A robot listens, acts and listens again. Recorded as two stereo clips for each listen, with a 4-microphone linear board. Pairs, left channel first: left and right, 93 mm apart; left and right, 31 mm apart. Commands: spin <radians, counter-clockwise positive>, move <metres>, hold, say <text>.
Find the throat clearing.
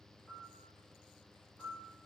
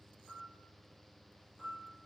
hold
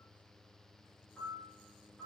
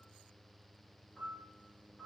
hold
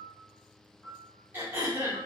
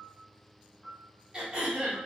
spin -0.44
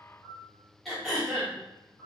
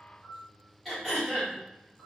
say Facing the throat clearing.